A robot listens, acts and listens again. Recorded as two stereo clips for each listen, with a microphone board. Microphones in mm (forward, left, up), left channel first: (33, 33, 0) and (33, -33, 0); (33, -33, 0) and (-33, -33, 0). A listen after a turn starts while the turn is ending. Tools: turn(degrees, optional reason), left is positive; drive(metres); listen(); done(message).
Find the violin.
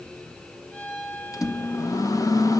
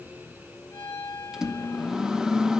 turn(degrees=25, reason="The violin: 25° left.")
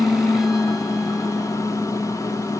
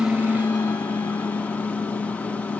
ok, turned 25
listen()
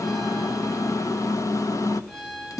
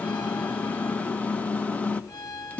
turn(degrees=-10, reason="The violin is now 10° right.")
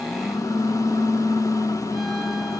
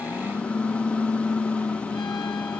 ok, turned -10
listen()
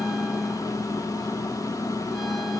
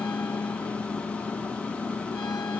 listen()
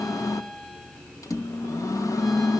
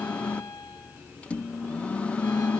done("I heard a violin from this way, but can't make it out now.")